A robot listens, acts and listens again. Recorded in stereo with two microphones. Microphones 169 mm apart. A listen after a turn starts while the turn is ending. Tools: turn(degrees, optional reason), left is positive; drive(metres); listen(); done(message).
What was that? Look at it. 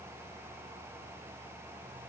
listen()
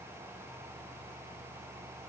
listen()
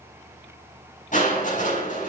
turn(degrees=50, reason="The crushing: about 50° left or 130° left.")
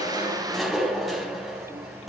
done("Facing the crushing.")